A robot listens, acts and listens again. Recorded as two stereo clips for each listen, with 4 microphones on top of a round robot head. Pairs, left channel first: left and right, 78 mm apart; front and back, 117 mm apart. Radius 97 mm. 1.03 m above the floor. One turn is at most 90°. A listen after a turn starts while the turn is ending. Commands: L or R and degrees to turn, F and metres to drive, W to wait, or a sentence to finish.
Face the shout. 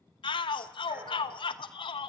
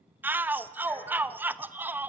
L90
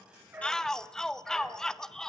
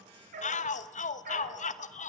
Found it: a shout, straight ahead, 1 to 2 m away.